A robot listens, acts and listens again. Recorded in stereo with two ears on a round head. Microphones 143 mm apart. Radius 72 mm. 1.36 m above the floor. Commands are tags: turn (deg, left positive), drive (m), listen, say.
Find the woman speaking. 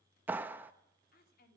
<turn deg="65"/>
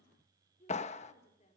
<turn deg="40"/>
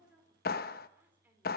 <turn deg="-10"/>
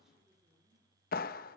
<listen/>
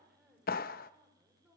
<say>Found it: a woman speaking, straight ahead.</say>